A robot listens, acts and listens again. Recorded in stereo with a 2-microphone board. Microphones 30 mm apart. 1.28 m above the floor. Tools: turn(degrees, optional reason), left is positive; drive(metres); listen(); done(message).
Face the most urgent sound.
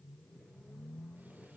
listen()
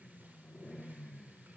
listen()
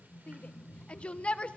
turn(degrees=40, reason="The shout: about 40° left or 140° left.")
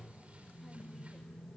listen()
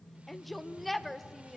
done("Facing the shout.")